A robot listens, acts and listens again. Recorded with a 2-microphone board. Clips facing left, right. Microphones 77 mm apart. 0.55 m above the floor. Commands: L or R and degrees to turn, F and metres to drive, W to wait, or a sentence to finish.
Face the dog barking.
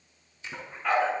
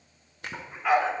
R30
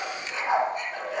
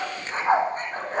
R140
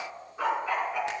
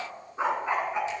R20
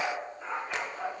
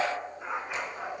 R10
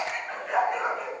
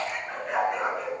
Found it: a dog barking, straight ahead.